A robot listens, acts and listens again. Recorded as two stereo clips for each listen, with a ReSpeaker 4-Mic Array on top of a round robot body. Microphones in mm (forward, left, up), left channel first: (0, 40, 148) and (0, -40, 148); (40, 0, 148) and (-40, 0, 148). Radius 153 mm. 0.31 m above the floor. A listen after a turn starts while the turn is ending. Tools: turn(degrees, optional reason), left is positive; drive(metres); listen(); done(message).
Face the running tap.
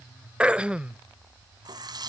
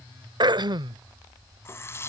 turn(degrees=-55, reason="The running tap: 55° right.")
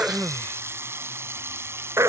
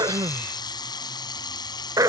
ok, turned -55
turn(degrees=-30, reason="The running tap is now 30° right.")
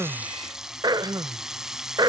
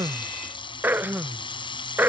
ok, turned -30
done("Found it: a running tap, straight ahead.")